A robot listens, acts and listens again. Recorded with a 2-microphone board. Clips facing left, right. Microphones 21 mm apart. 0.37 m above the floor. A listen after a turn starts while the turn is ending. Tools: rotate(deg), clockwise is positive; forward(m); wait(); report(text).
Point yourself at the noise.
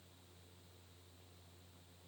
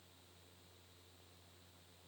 wait()
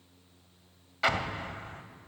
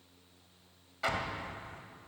rotate(-40)
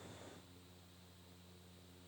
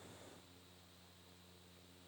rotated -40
wait()
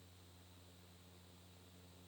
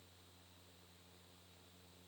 report("I heard an explosion, but can't make it out now. It was about straight ahead or 100° left.")